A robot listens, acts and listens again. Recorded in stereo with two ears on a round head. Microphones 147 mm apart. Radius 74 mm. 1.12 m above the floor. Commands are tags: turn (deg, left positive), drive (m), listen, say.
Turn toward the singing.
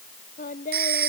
<turn deg="50"/>
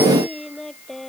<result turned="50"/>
<say>Facing the singing.</say>